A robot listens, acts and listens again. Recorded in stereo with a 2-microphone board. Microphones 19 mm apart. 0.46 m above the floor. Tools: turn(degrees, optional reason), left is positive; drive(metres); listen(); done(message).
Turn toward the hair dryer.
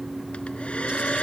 turn(degrees=70, reason="The hair dryer: about 70° left or 110° left.")
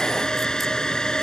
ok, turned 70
turn(degrees=40, reason="So it is at 40° left.")
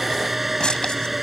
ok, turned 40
done("Facing the hair dryer.")